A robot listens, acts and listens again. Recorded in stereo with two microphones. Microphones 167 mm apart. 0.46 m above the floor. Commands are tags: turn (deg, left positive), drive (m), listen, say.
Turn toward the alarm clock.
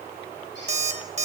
<turn deg="-40"/>
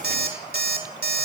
<turn deg="-90"/>
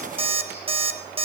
<turn deg="-35"/>
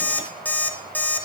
<turn deg="10"/>
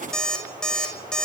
<say>Facing the alarm clock, 1 to 2 m away.</say>